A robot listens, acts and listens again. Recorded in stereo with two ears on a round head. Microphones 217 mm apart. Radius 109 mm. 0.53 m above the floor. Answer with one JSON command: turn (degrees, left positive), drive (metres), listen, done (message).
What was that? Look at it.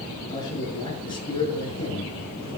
{"turn": 25}
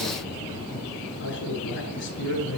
{"turn": 120}
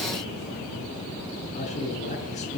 {"turn": 30}
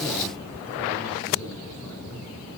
{"listen": true}
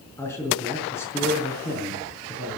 {"turn": 10}
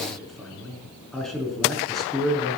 {"done": "Found it: a man speaking, straight ahead, over 4 m away."}